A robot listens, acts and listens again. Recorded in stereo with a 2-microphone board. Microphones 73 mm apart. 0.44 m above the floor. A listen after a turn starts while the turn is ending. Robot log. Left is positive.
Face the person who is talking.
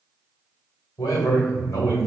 note: The man speaking: about 60° left or 120° left.
cmd yaw +60
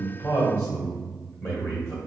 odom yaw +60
note: So it is at 30° left.
cmd yaw +30
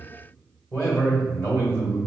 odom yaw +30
note: The man speaking is now 35° left.
cmd yaw +35
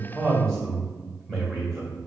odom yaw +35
end: Facing the man speaking, 1 to 2 m away.